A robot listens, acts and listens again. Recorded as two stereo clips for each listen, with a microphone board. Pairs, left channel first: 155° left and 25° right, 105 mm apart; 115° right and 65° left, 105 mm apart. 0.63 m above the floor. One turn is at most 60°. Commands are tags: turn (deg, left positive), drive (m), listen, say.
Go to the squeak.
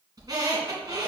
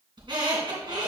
<turn deg="30"/>
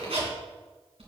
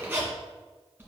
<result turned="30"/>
<drive m="1.0"/>
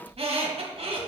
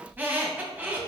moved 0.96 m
<drive m="1.0"/>
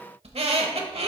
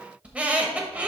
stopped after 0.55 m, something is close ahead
<turn deg="-10"/>
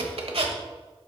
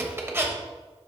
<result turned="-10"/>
<say>Arrived at the squeak, straight ahead.</say>